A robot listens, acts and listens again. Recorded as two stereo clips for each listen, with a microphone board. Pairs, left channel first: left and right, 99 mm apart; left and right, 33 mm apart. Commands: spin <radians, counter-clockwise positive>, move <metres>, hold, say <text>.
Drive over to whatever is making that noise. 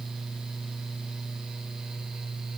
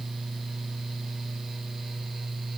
hold
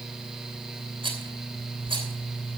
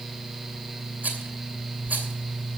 spin -1.05
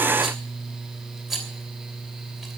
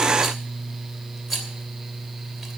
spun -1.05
move 1.0
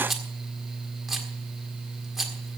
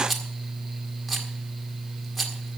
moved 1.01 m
move 1.0
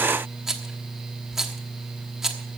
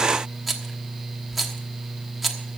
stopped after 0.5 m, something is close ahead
say I am next to the rattle.